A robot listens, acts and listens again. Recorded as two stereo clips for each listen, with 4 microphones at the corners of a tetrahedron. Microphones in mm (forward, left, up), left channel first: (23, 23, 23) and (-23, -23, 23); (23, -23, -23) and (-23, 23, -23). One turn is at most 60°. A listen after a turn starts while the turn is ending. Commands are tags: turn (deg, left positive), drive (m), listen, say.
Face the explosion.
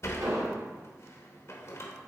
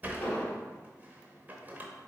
<turn deg="-60"/>
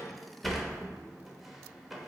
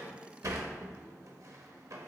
<turn deg="-50"/>
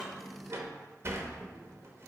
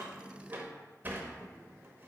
<say>Facing where the explosion came from. I can't hear it now.</say>